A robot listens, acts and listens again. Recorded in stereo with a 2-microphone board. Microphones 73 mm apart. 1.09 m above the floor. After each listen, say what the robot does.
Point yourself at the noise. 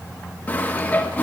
Turn 25° left.
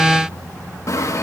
Turn 130° left.
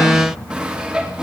Turn 10° right.
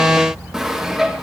Facing the sawing.